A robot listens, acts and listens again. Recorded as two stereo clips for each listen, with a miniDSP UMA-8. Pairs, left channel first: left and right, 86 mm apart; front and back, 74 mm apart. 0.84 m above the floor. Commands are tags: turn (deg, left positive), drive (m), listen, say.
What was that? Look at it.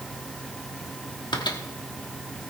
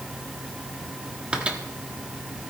<turn deg="105"/>
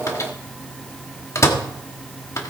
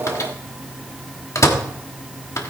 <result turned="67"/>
<turn deg="40"/>
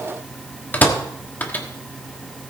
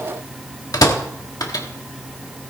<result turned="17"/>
<turn deg="20"/>
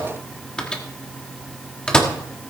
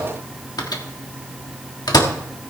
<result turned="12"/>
<turn deg="10"/>
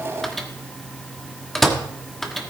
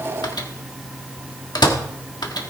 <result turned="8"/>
<say>Found it: a microwave, straight ahead.</say>